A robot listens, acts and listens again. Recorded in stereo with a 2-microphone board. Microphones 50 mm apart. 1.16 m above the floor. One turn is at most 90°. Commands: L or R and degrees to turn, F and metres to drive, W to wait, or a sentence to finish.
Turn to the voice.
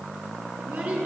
R45
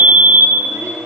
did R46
W
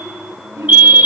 R85
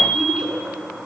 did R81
Facing the child speaking.